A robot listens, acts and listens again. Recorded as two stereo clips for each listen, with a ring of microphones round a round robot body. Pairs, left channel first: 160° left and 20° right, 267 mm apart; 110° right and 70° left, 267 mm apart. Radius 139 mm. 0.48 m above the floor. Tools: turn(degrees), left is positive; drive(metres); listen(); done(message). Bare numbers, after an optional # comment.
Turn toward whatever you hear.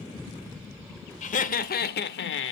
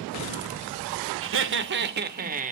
# The laughter: 125° left.
turn(125)
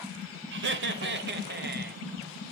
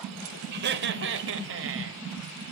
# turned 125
# The laughter is now 30° left.
turn(30)
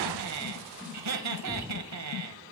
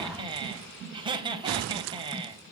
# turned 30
done("Found it: laughter, straight ahead, 2 to 4 m away.")